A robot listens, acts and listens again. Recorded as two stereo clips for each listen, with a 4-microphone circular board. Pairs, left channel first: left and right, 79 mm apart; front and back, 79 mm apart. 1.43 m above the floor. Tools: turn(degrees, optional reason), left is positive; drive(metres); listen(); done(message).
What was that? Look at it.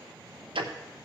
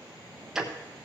turn(degrees=-95, reason="The ticking: 95° right.")
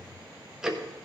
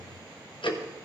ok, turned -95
done("Facing the ticking, under 1 m away.")